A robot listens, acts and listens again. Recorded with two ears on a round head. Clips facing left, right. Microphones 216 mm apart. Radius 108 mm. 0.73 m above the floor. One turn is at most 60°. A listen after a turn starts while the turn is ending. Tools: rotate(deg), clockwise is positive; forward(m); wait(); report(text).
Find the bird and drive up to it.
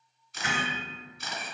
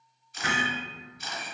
wait()
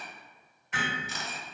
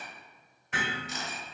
wait()
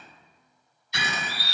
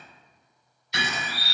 rotate(55)
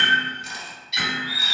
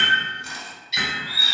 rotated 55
forward(1.0)
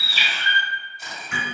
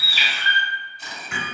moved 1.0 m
rotate(15)
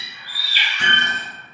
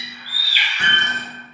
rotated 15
forward(1.0)
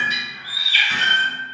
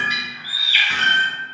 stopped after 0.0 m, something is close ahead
report("Arrived at the bird, straight ahead.")